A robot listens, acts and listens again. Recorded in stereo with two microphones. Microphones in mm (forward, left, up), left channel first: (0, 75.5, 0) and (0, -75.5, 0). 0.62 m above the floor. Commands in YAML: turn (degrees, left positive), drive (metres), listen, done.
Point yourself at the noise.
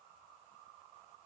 listen: true
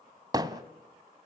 turn: -25
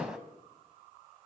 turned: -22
done: "Found it: hammering, straight ahead, 1 to 2 m away."